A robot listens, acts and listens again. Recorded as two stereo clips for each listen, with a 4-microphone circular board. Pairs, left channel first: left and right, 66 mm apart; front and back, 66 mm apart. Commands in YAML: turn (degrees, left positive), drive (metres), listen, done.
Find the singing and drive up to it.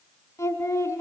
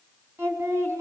turn: 135
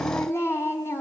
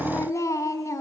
turn: 40
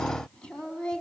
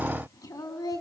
turn: 15
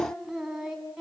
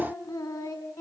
drive: 1.0
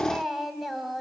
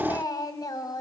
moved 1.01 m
drive: 1.0
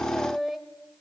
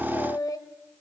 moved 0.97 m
drive: 1.0
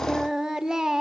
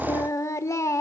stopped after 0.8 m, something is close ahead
turn: -10
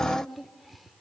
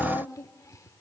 done: "I am next to the singing."